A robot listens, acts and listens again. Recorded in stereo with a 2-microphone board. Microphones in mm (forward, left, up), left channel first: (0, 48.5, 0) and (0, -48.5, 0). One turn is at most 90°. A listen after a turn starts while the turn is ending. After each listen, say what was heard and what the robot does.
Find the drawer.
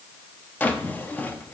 The drawer: about 20° left or 160° left. Turn 20° left.
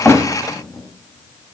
Keep listening.
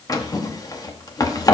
So it is at 140° left. Turn 90° left.
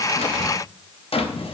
The drawer is now 75° left. Turn 75° left.
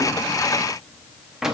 Facing the drawer, under 1 m away.